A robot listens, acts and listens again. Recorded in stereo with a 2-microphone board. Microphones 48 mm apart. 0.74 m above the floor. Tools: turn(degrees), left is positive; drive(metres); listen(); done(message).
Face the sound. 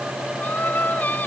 turn(degrees=40)
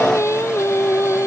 turn(degrees=105)
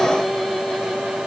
done("Facing the singing.")